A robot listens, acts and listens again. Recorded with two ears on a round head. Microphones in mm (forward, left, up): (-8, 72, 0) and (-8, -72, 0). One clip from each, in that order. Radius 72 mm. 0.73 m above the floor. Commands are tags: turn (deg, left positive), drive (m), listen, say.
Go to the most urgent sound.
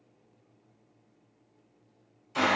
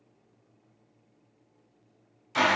<listen/>
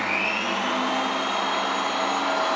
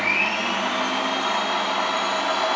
<listen/>
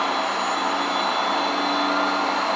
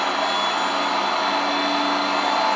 <say>I can't make out anything urgent to turn to.</say>